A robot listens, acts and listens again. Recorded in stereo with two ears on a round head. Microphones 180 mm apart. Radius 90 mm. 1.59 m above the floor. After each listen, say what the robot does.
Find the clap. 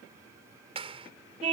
Turn 30° right.
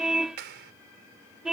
Turn 120° right.
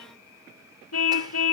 Keep listening.
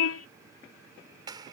Turn 20° right.
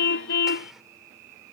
Keep listening.
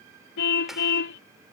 Keep listening.
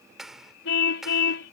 Found it: a clap, straight ahead.